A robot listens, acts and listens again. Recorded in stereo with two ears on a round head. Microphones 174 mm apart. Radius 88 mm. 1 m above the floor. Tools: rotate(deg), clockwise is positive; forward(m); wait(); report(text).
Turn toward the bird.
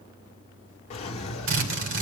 wait()
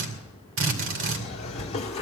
wait()
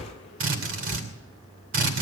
report("I can't make out a bird to turn to.")